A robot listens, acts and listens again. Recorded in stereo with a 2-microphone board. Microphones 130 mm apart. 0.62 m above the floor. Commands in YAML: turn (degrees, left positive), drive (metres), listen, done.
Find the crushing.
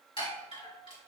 listen: true
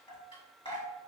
listen: true
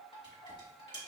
done: "I can't make out crushing to turn to."